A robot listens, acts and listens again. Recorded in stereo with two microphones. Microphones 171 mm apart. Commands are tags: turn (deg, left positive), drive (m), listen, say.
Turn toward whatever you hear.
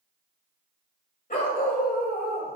<turn deg="65"/>
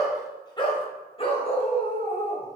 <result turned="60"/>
<turn deg="45"/>
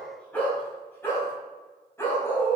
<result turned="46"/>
<turn deg="15"/>
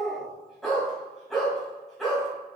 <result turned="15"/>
<say>Found it: a dog barking, straight ahead, 2 to 4 m away.</say>